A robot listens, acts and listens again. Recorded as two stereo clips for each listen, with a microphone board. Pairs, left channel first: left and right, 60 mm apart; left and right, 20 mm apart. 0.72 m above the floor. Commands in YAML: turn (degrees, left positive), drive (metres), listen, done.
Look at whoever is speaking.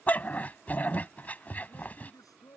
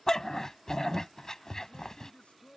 turn: 90
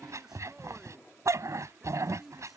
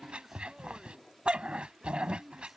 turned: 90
done: "Facing the man speaking."